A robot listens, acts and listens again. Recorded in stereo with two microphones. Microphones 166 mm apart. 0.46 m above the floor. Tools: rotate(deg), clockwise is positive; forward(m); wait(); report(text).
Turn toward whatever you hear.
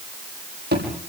rotate(90)
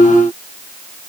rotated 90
report("I heard a thud from this way, but can't make it out now.")